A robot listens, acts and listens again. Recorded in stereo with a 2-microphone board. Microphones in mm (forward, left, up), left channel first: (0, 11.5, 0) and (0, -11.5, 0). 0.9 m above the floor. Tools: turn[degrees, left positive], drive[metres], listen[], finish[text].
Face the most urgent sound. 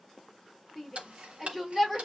Action: turn[30]
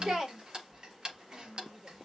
Thought: So it is at 35° right.
Action: turn[-35]
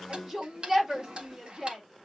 Thought: The shout is now 15° right.
Action: turn[-15]
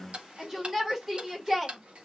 Action: finish[Found it: a shout, straight ahead, 2 to 4 m away.]